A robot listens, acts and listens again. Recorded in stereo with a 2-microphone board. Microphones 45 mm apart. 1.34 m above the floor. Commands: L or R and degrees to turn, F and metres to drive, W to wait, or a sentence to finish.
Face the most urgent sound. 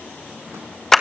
W
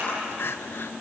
L55
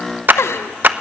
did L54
L70
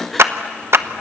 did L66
Facing the crying, under 1 m away.